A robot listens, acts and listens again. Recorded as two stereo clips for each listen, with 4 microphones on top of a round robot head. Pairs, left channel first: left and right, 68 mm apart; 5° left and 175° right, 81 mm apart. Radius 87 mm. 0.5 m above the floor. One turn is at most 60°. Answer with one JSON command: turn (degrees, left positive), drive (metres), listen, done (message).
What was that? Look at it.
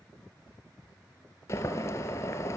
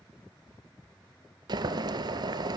{"turn": 60}
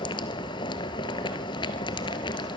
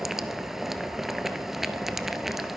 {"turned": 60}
{"turn": 60}
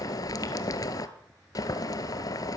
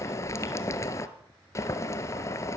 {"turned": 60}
{"turn": 55}
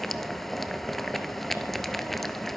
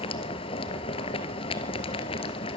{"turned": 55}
{"done": "Found it: boiling, straight ahead, 1 to 2 m away."}